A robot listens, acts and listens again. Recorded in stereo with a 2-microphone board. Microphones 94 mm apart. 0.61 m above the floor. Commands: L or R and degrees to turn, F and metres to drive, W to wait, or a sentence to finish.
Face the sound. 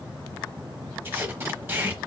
R25
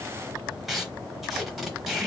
Facing the tape being pulled, under 1 m away.